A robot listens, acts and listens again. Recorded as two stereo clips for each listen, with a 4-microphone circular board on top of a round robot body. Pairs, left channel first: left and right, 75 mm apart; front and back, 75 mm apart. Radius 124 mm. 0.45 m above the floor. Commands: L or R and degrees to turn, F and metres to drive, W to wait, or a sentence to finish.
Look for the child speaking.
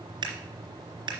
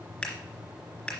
W
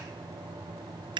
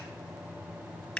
W
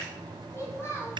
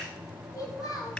L35
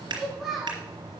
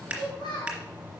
Found it: a child speaking, straight ahead, 2 to 4 m away.